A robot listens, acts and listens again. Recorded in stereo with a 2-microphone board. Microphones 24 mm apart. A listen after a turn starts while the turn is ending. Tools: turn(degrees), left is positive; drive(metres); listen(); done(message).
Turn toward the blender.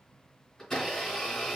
turn(degrees=20)
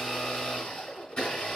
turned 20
turn(degrees=140)
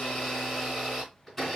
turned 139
done("Found it: a blender, straight ahead.")